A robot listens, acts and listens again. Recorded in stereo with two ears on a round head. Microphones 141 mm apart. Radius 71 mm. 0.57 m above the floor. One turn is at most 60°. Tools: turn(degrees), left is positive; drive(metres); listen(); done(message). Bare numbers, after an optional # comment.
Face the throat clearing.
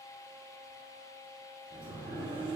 listen()
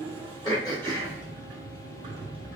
# The throat clearing: about 30° left or 150° left.
turn(30)
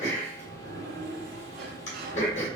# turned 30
# So it is at 120° left.
turn(60)
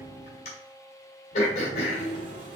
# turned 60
# The throat clearing is now 55° left.
turn(55)
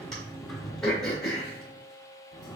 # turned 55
done("Facing the throat clearing, 1 to 2 m away.")